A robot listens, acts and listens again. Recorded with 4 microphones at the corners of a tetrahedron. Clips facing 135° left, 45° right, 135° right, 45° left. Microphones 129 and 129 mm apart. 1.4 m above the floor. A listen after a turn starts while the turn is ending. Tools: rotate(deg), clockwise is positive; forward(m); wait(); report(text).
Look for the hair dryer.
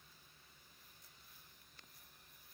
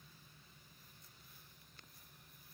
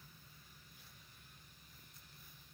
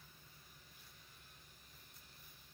wait()
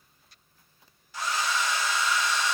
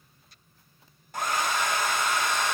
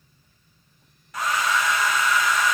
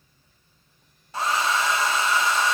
rotate(10)
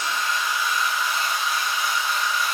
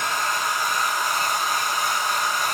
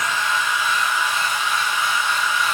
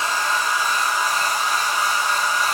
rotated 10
report("Facing the hair dryer, under 1 m away.")